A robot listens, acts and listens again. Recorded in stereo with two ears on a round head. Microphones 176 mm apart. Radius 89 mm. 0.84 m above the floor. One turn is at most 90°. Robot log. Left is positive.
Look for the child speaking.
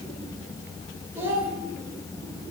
cmd yaw -30
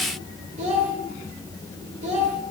note: So it is at 140° right.
cmd yaw -90
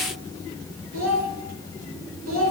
note: The child speaking is now 90° right.
cmd yaw -90
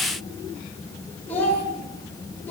note: The child speaking is now 10° left.
cmd yaw +10
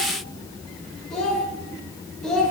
end: Facing the child speaking.